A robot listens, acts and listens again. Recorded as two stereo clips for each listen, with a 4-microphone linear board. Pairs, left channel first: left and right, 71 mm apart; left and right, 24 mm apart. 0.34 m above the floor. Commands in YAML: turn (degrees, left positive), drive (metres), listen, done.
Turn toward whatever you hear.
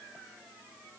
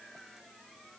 listen: true
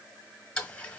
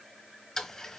turn: 15
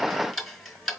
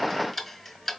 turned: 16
done: "Facing the ticking."